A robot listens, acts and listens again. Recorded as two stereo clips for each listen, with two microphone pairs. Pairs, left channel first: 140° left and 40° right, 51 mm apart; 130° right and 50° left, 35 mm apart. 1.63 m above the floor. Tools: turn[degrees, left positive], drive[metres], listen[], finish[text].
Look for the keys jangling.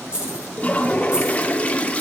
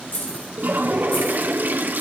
Thought: The keys jangling: 110° right.
Action: turn[-110]
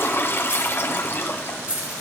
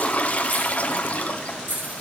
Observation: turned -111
Thought: The keys jangling is now 25° left.
Action: turn[25]
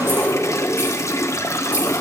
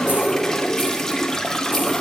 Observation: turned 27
Action: listen[]
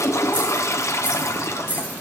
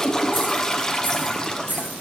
Thought: The keys jangling is now 15° left.
Action: turn[15]
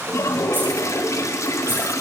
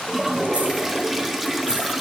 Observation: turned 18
Action: listen[]
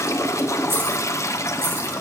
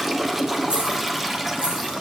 Action: listen[]
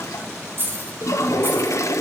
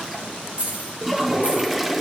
Action: finish[Found it: keys jangling, straight ahead.]